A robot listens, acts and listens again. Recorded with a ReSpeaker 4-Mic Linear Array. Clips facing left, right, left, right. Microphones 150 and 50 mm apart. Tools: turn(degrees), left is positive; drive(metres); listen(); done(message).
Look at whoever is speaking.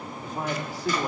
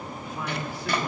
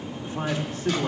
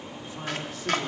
turn(degrees=45)
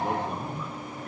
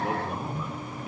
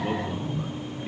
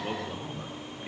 done("Found it: a man speaking, straight ahead, 2 to 4 m away.")